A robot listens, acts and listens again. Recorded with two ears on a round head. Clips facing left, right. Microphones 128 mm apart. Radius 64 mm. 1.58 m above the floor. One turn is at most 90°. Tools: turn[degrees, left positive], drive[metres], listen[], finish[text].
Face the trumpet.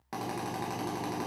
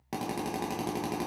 Action: listen[]
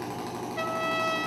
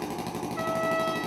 Thought: The trumpet: about 30° left or 150° left.
Action: turn[30]
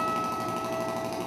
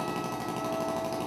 Thought: So it is at 120° left.
Action: turn[90]
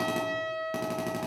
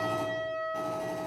Thought: The trumpet is now 30° left.
Action: turn[30]
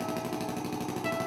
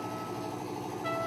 Action: listen[]
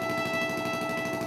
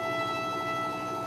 Thought: The trumpet is now 15° left.
Action: turn[15]
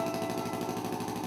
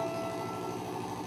Action: listen[]
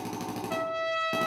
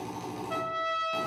Action: finish[Found it: a trumpet, straight ahead.]